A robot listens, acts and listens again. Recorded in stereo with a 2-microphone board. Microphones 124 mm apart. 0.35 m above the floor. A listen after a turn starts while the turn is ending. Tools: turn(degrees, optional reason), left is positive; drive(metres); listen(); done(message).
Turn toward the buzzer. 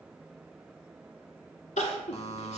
turn(degrees=55, reason="The buzzer: about 55° left or 125° left.")
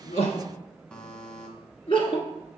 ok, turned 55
turn(degrees=10, reason="So it is at 10° left.")
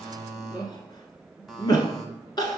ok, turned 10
done("Found it: a buzzer, straight ahead, 1 to 2 m away.")